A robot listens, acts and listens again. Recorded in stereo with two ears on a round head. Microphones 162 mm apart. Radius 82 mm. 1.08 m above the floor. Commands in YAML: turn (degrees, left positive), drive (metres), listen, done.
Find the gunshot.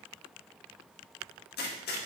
turn: 60
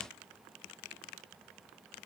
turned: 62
listen: true
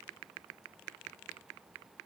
done: "I heard a gunshot, but can't make it out now. It was about straight ahead or 55° left."